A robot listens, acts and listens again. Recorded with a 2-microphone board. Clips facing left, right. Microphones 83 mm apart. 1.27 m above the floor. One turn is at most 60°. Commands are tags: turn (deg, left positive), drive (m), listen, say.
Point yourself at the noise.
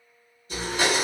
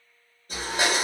<turn deg="-50"/>
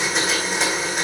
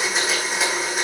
<say>Found it: a blender, straight ahead.</say>